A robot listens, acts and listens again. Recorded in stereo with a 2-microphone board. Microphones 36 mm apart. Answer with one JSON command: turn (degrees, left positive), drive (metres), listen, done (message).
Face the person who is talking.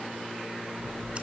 {"listen": true}
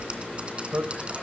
{"turn": -55}
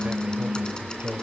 {"turn": -55}
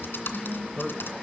{"done": "Found it: a man speaking, straight ahead, 1 to 2 m away."}